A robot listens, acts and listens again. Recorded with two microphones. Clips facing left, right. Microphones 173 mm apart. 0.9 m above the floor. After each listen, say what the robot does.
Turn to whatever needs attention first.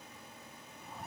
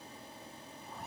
Keep listening.
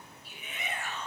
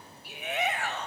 Turn 70° right.
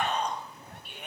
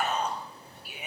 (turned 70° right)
Facing the shout.